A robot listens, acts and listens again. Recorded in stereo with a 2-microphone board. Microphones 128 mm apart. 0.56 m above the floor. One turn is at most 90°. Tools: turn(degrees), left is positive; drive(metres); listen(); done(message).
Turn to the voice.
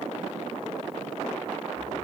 listen()
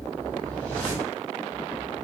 listen()
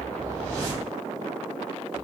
done("I can't make out anyone speaking, only a whoosh.")